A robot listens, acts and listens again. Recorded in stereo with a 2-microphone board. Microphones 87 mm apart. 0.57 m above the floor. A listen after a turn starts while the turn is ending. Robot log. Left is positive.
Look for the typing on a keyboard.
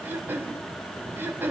cmd idle
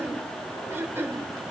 cmd idle
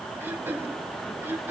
end: I can't make out typing on a keyboard to turn to.